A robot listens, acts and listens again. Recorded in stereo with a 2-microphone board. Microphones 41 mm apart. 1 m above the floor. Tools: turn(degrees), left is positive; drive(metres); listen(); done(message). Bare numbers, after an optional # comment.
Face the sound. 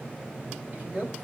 # The man speaking: about 35° right or 145° right.
turn(-35)
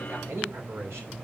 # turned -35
# So it is at 95° right.
turn(-95)
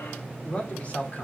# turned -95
# The man speaking is now 35° left.
turn(35)
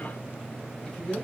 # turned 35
# The man speaking is now 15° left.
turn(15)
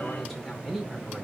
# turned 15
done("Facing the man speaking, 2 to 4 m away.")